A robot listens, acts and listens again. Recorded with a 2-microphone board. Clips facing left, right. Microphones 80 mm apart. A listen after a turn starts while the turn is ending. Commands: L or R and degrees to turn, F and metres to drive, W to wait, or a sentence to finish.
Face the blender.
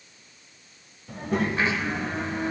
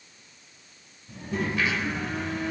L35
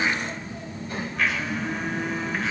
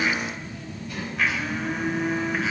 Found it: a blender, straight ahead, 2 to 4 m away.